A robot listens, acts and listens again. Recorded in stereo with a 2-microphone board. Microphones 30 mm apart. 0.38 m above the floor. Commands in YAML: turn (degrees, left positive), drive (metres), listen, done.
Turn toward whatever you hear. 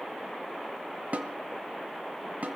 turn: -60
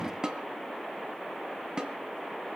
turn: -30
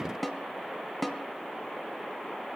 done: "Facing the snare drum."